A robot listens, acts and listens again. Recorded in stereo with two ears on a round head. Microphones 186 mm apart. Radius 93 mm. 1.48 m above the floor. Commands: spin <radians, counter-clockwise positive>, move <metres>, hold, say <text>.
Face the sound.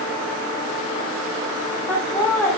spin 0.52
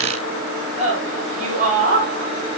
spin -0.70
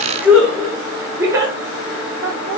spin -0.26
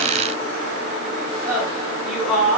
say Facing the laughter, over 4 m away.